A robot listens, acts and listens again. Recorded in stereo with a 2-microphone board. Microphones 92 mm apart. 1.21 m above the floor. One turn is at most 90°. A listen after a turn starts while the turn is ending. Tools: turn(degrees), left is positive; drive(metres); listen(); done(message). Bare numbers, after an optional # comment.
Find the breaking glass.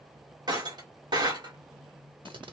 # The breaking glass: about 50° right or 130° right.
turn(-50)
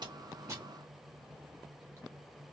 listen()
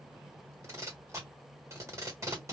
done("I heard breaking glass, but can't make it out now. It was about straight ahead or 80° right.")